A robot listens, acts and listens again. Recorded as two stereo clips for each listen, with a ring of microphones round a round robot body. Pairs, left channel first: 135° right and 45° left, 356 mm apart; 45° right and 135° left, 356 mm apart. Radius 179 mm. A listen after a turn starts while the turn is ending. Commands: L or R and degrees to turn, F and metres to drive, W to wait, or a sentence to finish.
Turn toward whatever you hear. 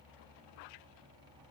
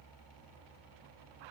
W
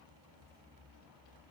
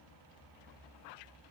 W
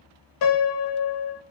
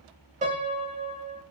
R155
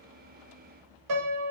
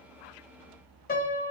L20
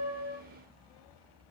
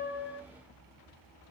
W
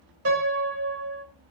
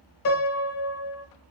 Found it: a piano, straight ahead, under 1 m away.